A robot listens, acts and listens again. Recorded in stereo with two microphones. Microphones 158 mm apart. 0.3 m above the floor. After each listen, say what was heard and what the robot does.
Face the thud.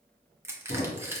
The thud: about 70° left or 110° left. Turn 70° left.
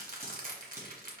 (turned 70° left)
Keep listening.
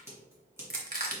I heard a thud, but can't make it out now. It was about straight ahead or 40° left.